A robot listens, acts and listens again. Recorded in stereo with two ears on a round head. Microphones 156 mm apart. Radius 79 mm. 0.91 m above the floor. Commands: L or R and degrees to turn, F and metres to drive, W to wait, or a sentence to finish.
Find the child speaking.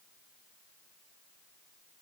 W
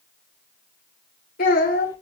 L65
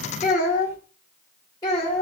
L20
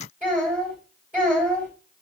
Facing the child speaking.